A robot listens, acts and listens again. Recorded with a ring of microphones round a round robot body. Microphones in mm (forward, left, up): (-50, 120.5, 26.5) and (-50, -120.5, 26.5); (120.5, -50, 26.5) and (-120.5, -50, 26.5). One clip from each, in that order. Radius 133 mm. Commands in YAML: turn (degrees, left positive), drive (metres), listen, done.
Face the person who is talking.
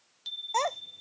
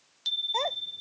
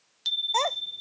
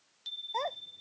turn: 35
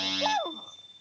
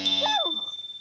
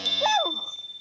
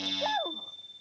done: "Found it: a child speaking, straight ahead."